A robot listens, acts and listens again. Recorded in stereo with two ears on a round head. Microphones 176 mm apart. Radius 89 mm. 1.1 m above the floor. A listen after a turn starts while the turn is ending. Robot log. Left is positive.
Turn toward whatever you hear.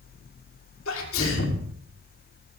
note: The sneeze: about 75° left or 105° left.
cmd yaw +75
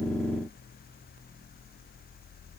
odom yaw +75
cmd idle
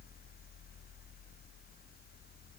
end: I heard a sneeze, but can't make it out now. It was about straight ahead or 30° left.